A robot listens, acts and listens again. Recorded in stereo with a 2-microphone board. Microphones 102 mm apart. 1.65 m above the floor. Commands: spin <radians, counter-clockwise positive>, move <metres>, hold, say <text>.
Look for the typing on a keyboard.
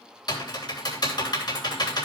spin 0.79
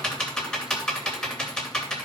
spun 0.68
say Facing the typing on a keyboard.